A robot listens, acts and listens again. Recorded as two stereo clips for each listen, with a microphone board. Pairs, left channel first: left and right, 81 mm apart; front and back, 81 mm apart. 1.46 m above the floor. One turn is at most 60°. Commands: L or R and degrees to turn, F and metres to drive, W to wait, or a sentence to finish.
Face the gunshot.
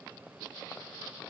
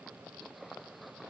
W
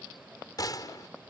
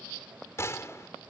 L55
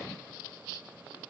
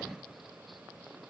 I heard a gunshot from this way, but can't make it out now.